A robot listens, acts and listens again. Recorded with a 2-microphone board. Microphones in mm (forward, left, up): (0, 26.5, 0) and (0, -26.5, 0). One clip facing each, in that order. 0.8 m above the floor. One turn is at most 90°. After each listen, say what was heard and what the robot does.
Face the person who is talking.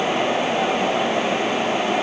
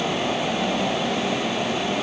Keep listening.
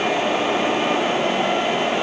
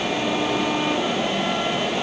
Keep listening.
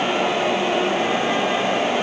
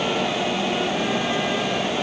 I can't make out anyone speaking to turn to.